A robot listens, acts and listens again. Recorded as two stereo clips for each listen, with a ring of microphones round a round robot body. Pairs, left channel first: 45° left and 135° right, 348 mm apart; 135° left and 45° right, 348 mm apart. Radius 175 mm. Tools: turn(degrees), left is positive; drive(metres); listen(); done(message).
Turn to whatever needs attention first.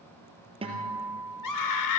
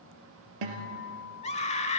turn(degrees=65)
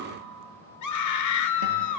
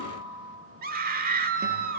turn(degrees=15)
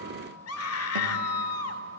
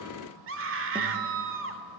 done("Found it: a scream, straight ahead.")